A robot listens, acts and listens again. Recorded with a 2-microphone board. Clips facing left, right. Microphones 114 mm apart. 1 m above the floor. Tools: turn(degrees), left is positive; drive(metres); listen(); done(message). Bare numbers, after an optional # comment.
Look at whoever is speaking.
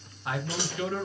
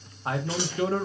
# The man speaking: about 35° right or 145° right.
turn(-35)
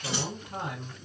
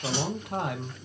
# So it is at 110° right.
turn(-110)
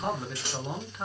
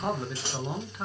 done("Found it: a man speaking, straight ahead.")